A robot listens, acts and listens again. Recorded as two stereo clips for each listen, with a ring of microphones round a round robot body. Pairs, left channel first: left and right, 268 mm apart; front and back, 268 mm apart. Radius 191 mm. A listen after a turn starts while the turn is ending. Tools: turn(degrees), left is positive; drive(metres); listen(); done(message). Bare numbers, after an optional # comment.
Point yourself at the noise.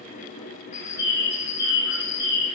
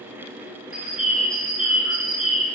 # The bird: 90° left.
turn(90)
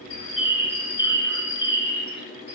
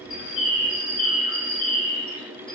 # The bird is now 40° left.
turn(40)
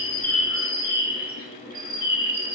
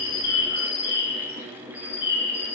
# The bird is now 10° right.
turn(-10)
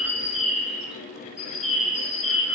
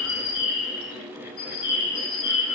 done("Found it: a bird, straight ahead.")